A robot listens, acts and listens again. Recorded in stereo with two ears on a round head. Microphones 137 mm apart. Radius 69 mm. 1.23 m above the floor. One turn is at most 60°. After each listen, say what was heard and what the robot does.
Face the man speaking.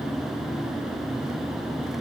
Keep listening.
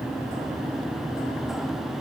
Keep listening.
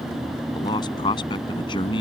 The man speaking: about 35° left or 145° left. Turn 35° left.
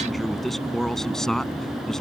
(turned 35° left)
Facing the man speaking.